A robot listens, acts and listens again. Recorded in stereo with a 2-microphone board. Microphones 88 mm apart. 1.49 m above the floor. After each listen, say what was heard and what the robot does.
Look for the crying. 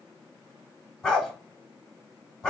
Keep listening.
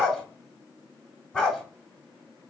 Keep listening.
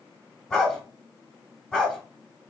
I can't make out crying, only a dog barking.